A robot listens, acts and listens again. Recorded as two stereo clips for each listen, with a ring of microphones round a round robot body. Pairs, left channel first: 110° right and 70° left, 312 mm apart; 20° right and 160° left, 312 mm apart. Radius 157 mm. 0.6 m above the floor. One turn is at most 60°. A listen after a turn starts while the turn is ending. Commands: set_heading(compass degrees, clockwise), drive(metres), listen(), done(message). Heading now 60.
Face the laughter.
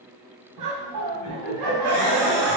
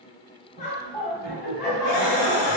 set_heading(30)
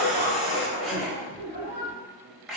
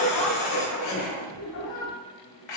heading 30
set_heading(40)
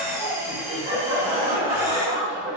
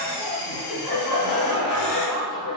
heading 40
done("Found it: laughter, straight ahead, 2 to 4 m away.")